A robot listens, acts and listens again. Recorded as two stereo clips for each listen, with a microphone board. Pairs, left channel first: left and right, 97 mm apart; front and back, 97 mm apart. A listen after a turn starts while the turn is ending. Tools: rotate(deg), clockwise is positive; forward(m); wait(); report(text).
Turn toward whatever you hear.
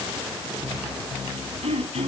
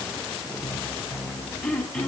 rotate(80)
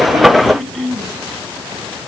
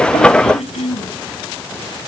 report("Found it: throat clearing, straight ahead.")